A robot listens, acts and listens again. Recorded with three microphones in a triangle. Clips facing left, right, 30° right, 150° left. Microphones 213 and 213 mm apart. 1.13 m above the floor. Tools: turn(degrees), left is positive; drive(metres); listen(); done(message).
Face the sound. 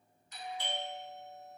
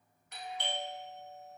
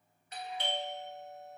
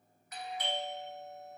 turn(degrees=-90)
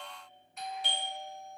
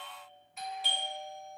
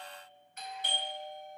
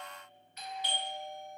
done("Found it: a doorbell, straight ahead.")